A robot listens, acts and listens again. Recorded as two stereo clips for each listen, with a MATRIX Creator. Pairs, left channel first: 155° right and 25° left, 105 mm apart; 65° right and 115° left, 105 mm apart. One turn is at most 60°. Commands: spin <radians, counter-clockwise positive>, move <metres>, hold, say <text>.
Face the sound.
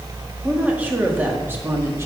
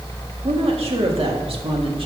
spin 1.05
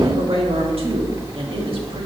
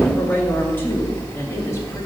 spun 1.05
say Found it: a woman speaking, straight ahead, 2 to 4 m away.